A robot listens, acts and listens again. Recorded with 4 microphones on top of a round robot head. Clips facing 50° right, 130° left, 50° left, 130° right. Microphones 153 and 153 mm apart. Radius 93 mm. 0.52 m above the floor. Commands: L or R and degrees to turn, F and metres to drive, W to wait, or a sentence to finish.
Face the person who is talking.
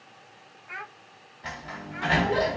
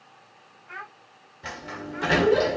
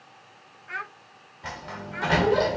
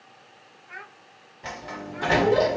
L35
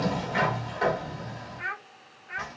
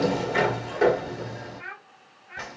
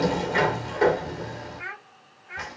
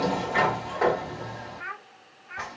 R10
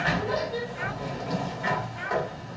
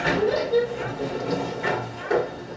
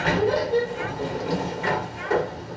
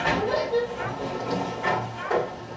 W
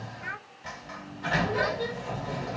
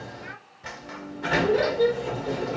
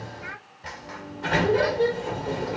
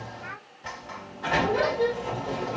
W
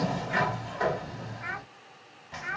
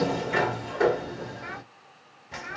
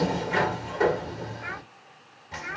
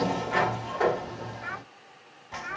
Found it: a child speaking, straight ahead.